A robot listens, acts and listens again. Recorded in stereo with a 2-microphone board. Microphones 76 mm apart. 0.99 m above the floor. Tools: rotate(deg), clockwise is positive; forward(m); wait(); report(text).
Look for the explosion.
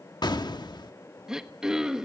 rotate(-75)
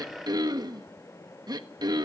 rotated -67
wait()
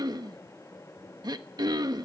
report("I heard an explosion, but can't make it out now. It was about 5° left or 40° left.")